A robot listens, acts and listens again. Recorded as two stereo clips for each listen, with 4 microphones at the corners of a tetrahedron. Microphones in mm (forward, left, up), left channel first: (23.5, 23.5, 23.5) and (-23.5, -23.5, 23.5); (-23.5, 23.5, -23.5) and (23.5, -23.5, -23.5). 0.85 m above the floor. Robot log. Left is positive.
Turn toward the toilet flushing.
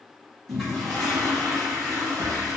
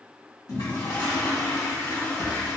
note: The toilet flushing: 135° left.
cmd yaw +135
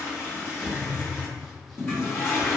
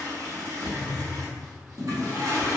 note: The toilet flushing is now 10° right.
cmd yaw -10
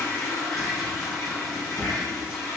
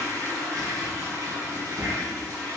end: Found it: a toilet flushing, straight ahead.